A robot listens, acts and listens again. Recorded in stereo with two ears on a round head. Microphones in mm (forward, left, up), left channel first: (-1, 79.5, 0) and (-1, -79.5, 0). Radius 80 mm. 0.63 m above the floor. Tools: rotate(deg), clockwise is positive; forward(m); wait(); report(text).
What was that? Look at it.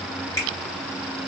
rotate(-15)
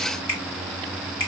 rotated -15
rotate(-150)
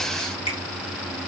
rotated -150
rotate(-35)
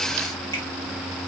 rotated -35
wait()
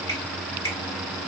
rotate(-20)
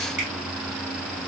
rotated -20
wait()
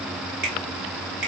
report("Facing the finger snap.")